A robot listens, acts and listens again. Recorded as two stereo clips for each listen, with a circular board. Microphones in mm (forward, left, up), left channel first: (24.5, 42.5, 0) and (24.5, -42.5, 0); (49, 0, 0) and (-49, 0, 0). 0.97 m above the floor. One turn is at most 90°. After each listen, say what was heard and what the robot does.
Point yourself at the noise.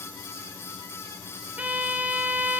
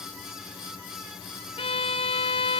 The violin: 15° right. Turn 15° right.
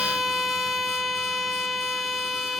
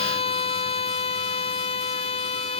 Facing the violin, under 1 m away.